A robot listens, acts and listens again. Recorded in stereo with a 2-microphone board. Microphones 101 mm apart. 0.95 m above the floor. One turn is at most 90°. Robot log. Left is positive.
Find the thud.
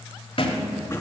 note: The thud: about 55° left or 125° left.
cmd yaw +55
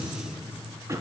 cmd idle
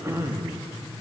end: I heard a thud, but can't make it out now. It was about straight ahead or 70° left.